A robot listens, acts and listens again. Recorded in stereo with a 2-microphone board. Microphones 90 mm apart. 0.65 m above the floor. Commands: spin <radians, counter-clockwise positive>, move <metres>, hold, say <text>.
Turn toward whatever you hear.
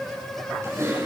spin -0.61
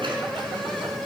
hold
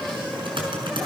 spin -1.92
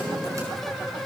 hold
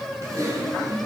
spin -0.61
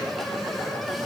hold
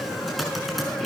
say Facing the typing on a keyboard.